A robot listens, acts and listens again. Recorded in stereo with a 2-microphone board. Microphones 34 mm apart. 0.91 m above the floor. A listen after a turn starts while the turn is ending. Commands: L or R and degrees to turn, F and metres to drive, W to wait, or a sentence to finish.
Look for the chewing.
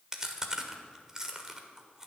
R30
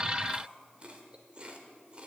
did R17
R150
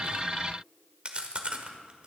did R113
R35
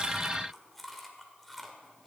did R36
Found it: chewing, straight ahead, 1 to 2 m away.